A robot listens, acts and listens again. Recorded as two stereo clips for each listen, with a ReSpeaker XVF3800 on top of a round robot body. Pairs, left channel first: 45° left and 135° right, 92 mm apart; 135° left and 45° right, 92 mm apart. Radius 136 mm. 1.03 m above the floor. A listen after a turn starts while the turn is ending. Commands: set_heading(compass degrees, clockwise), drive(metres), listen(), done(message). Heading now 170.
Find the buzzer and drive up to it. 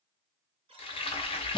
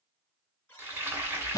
set_heading(330)
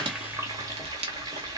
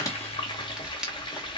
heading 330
listen()
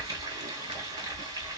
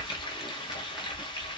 listen()
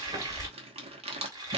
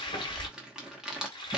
done("I heard a buzzer from this way, but can't make it out now. I did not reach it.")